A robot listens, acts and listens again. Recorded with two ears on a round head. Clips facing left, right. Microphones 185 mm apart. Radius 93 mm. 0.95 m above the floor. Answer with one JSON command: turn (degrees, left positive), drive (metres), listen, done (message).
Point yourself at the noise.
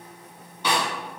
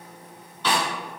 {"turn": 30}
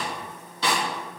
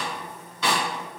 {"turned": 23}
{"turn": 145}
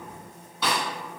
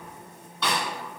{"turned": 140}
{"done": "Facing the snare drum."}